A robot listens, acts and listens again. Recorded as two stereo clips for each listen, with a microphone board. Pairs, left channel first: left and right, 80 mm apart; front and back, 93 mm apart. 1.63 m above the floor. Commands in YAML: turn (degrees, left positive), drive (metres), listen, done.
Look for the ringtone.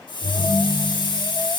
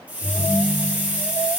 turn: -115
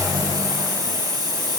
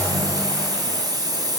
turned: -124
listen: true
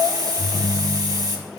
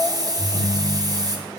done: "Facing the ringtone, 2 to 4 m away."